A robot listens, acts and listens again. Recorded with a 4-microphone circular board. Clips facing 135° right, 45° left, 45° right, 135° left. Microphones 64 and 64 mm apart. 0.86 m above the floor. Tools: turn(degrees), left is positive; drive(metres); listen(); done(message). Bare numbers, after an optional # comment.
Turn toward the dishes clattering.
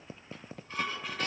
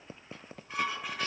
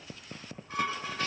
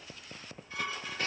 # The dishes clattering: 30° right.
turn(-30)
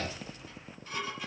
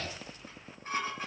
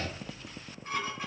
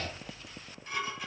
# The dishes clattering is now 10° left.
turn(10)
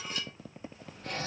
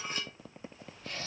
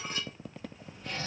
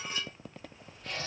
done("Facing the dishes clattering, 2 to 4 m away.")